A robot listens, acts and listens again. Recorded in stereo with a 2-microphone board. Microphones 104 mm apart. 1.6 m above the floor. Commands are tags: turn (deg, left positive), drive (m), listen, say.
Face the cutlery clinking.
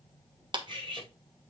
<turn deg="-50"/>
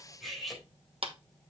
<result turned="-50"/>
<say>Found it: cutlery clinking, straight ahead, over 4 m away.</say>